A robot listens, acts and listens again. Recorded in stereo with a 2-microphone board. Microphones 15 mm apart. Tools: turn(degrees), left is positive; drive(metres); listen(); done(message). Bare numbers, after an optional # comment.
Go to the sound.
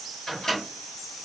# The microwave: about 50° left or 130° left.
turn(50)
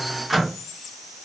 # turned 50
drive(1.0)
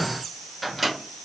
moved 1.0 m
drive(1.0)
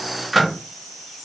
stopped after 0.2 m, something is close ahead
done("Arrived at the microwave, straight ahead.")